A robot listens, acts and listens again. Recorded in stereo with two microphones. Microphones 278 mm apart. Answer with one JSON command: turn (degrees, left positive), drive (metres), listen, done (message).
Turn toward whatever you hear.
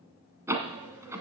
{"turn": -30}
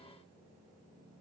{"listen": true}
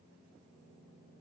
{"done": "I heard a door slam, but can't make it out now. It was about 20° left or 140° right."}